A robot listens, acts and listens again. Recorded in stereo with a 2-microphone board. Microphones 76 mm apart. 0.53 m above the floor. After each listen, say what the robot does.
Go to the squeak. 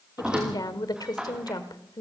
Turn 30° right.
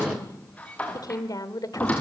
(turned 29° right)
Turn 15° left.
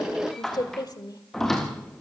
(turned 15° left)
Drive 1.0 m forward.
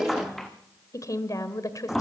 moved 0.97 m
Drive 1.0 m forward.
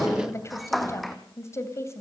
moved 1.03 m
Drive 1.0 m forward.
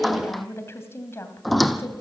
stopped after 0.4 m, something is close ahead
I am next to the squeak.